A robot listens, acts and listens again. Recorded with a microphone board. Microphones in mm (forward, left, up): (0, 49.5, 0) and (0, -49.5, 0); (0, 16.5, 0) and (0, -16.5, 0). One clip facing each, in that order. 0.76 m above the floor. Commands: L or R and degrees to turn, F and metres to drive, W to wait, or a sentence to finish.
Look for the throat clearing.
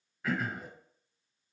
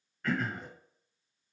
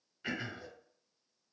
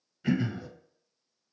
L30
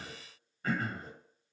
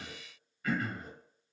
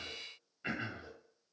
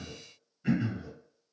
L140
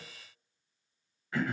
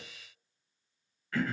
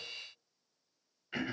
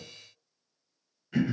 L20
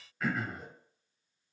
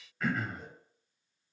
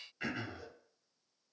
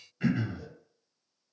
Facing the throat clearing.